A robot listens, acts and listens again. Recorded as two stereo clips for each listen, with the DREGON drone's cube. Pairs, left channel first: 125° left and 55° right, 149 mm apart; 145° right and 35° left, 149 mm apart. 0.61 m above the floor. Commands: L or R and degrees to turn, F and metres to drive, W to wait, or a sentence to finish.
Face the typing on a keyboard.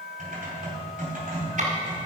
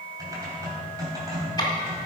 R30
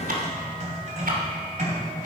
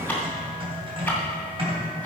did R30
R15
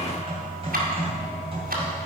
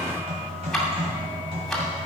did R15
R10
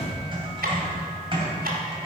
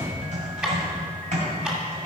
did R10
Facing the typing on a keyboard, 2 to 4 m away.